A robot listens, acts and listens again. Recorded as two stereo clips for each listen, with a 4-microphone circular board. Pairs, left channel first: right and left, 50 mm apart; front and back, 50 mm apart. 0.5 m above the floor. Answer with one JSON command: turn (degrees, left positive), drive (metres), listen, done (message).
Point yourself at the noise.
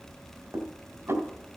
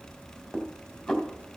{"turn": 90}
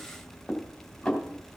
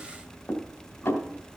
{"done": "Facing the dishes clattering."}